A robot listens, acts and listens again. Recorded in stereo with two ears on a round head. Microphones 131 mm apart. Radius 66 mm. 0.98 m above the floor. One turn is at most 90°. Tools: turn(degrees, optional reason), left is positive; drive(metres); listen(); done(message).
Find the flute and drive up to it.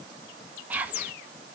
listen()
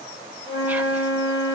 turn(degrees=35, reason="The flute: about 35° left or 145° left.")
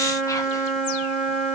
drive(metres=1.0)
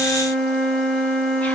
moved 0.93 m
drive(metres=1.0)
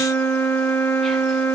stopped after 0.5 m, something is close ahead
turn(degrees=10, reason="The flute is now 10° left.")
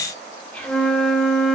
done("Arrived at the flute, straight ahead.")